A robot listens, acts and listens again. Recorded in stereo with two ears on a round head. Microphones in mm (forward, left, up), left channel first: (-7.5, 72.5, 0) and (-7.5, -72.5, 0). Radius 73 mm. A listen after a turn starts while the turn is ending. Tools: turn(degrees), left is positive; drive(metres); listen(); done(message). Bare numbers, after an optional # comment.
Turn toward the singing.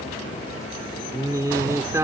# The singing: about 15° right or 165° right.
turn(-15)
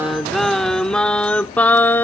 # So it is at 15° left.
turn(15)
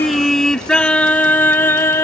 # The singing is now 15° left.
turn(15)
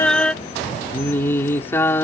# The singing is now 15° left.
turn(15)
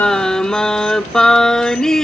done("Facing the singing.")